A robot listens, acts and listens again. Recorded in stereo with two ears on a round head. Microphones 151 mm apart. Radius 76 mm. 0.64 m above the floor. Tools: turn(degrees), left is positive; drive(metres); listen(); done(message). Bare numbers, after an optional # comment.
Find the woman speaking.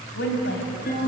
turn(90)
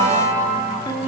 listen()
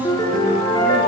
listen()
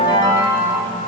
done("I heard a woman speaking from this way, but can't make it out now.")